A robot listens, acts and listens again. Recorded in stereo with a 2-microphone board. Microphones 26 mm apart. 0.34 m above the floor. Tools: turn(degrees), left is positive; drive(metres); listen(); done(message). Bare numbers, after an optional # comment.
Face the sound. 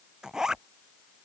# The zipper: about 20° right or 160° right.
turn(-20)
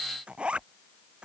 # So it is at 140° right.
turn(-140)
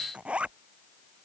# The zipper is now 45° right.
turn(-45)
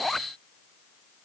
done("Facing the zipper.")